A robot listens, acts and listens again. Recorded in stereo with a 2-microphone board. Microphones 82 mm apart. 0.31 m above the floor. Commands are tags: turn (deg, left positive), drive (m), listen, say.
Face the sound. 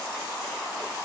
<listen/>
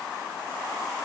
<listen/>
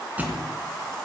<turn deg="-20"/>
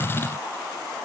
<listen/>
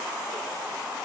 <say>I heard a thud, but can't make it out now. It was about straight ahead or 140° right.</say>